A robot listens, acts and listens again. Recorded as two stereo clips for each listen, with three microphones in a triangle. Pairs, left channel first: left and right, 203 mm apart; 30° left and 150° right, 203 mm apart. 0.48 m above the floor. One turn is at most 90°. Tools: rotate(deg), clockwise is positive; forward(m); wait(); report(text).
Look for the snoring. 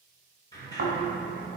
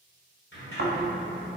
rotate(90)
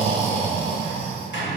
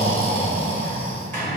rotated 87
rotate(35)
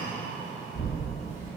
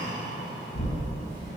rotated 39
report("Facing the snoring.")